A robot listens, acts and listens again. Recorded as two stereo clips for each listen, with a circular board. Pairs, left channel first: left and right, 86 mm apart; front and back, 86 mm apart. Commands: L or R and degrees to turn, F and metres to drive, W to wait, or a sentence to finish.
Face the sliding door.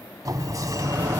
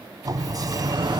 R140
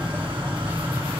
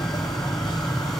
R25
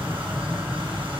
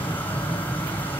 Facing the sliding door, 1 to 2 m away.